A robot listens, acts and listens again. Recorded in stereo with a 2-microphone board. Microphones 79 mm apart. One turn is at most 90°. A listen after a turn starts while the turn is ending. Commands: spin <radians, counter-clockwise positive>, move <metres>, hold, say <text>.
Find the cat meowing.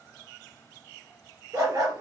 hold
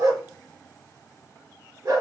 hold
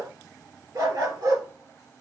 say I can't make out a cat meowing, only a dog barking.